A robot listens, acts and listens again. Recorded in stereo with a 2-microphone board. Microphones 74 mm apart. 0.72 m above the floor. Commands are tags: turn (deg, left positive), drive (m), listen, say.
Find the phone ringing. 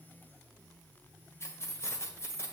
<listen/>
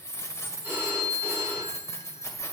<turn deg="-35"/>
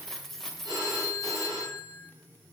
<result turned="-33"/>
<turn deg="-115"/>
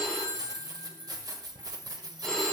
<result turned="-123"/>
<turn deg="10"/>
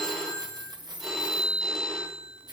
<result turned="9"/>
<say>Found it: a phone ringing, straight ahead.</say>